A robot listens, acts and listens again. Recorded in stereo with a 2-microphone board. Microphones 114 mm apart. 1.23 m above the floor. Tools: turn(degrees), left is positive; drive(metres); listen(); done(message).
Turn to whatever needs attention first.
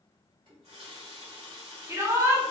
turn(degrees=-25)
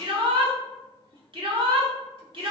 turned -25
turn(degrees=-135)
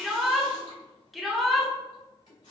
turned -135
done("Facing the shout.")